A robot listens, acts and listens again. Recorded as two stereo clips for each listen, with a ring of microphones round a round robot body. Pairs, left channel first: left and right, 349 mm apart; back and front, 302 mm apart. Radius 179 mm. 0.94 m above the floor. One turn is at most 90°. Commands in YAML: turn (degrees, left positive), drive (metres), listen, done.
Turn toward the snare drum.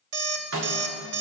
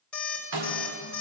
turn: -35
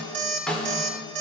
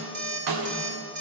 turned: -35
done: "Found it: a snare drum, straight ahead."